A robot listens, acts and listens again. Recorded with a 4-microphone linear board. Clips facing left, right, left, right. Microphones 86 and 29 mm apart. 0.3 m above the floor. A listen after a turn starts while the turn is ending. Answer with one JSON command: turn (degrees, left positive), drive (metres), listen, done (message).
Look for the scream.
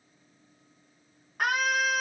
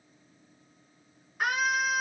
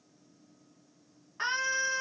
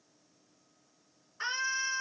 {"turn": 55}
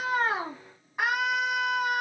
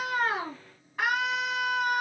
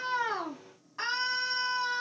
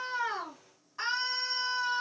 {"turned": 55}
{"turn": 20}
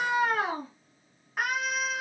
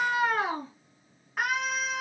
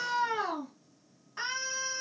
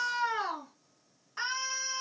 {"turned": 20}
{"done": "Found it: a scream, straight ahead."}